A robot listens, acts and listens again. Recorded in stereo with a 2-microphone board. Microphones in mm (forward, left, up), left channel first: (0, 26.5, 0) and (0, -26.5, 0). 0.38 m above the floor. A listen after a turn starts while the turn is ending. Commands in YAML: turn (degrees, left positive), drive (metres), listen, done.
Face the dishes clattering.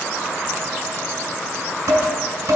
turn: -90
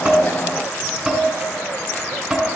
done: "Found it: dishes clattering, straight ahead."